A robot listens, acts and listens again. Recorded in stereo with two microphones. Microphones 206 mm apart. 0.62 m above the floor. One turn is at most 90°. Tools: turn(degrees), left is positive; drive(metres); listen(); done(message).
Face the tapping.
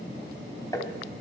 turn(degrees=15)
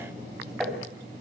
done("Found it: tapping, straight ahead.")